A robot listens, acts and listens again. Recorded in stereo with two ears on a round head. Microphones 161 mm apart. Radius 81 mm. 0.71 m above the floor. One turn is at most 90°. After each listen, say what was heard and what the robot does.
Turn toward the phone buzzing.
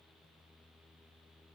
Keep listening.
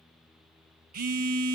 The phone buzzing: about 50° right or 130° right. Turn 50° right.
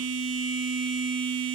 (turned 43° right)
So it is at 85° right. Turn 85° right.
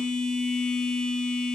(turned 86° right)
Facing the phone buzzing.